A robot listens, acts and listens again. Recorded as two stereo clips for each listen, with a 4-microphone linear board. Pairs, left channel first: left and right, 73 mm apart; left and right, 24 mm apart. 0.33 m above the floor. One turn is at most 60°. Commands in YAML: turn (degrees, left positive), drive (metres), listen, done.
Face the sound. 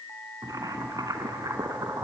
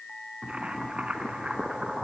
turn: -60
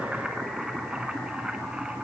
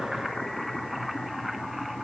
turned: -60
turn: -10
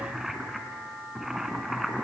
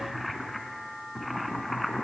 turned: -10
done: "Facing the boiling."